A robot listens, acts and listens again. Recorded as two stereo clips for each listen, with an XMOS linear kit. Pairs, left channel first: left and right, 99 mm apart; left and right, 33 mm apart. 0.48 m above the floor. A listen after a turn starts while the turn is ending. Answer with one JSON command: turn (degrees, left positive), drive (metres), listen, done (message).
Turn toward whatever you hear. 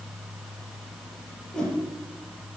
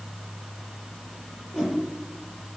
{"turn": 30}
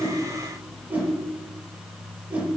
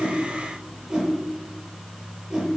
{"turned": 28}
{"turn": -20}
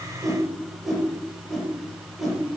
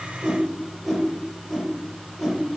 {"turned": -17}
{"done": "Facing the whoosh, over 4 m away."}